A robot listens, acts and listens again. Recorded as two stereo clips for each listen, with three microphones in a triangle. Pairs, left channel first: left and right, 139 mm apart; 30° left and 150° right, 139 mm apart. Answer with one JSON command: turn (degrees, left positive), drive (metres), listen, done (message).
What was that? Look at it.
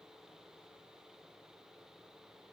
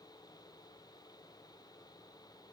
{"listen": true}
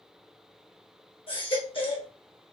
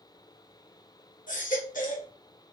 {"turn": 40}
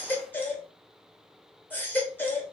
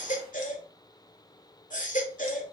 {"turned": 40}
{"turn": 15}
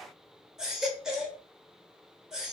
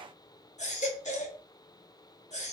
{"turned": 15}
{"done": "Found it: a baby crying, straight ahead."}